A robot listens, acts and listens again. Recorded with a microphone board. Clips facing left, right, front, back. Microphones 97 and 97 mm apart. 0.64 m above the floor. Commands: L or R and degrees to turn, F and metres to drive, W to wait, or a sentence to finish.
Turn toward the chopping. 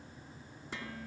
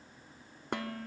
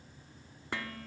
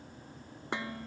W
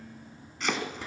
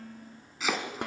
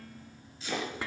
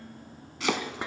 R175
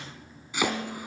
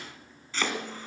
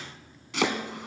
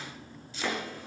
L10
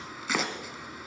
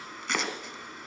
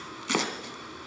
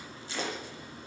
Facing the chopping.